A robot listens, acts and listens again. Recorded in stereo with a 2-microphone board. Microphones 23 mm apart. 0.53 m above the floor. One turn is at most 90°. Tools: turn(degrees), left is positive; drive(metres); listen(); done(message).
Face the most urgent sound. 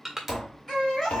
turn(degrees=15)
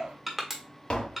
turn(degrees=90)
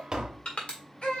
turn(degrees=60)
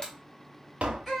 done("Facing the baby crying.")